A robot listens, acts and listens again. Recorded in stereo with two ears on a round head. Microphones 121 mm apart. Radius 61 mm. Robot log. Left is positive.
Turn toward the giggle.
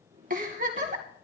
note: The giggle: about 65° right or 115° right.
cmd yaw -65
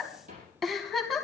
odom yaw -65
end: Facing the giggle.